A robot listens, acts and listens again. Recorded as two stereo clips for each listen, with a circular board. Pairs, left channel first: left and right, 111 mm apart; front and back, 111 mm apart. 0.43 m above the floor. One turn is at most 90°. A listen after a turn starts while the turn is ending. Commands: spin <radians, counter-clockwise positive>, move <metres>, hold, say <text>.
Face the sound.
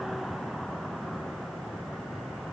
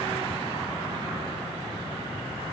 hold
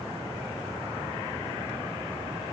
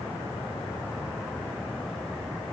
hold
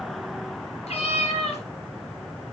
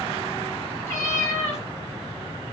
spin 1.13
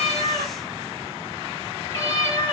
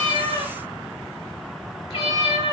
spin 0.52
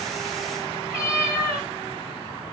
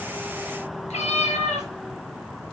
spin -0.17
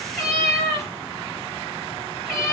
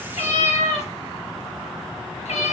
say Found it: a cat meowing, straight ahead, 2 to 4 m away.